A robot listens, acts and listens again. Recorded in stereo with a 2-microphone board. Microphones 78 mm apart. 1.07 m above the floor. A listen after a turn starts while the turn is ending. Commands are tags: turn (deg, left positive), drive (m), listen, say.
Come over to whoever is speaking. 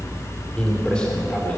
<turn deg="30"/>
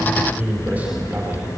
<turn deg="-20"/>
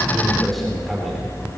<drive m="1.0"/>
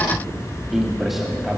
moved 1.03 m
<drive m="1.0"/>
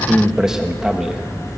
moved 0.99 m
<drive m="1.0"/>
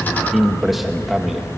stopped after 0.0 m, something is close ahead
<say>I am next to the man speaking.</say>